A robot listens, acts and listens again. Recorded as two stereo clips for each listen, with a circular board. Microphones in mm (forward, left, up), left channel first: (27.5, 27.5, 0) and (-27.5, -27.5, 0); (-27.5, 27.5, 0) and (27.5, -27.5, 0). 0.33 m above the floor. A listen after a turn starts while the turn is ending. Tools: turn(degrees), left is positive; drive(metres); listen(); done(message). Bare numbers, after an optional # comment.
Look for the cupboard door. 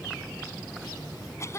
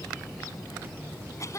listen()
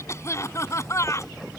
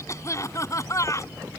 listen()
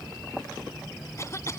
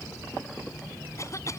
done("I can't make out a cupboard door to turn to.")